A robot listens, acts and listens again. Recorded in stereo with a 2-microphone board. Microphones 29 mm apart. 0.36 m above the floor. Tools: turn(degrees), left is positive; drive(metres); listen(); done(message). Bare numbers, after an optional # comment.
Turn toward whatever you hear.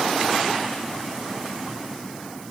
listen()
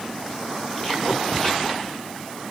listen()
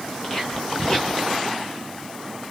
# The whispering: about 30° left or 150° left.
turn(30)
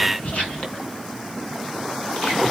# So it is at 120° left.
turn(120)
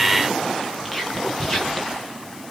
# The whispering is now 20° left.
turn(20)
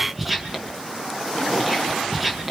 done("Found it: whispering, straight ahead, 2 to 4 m away.")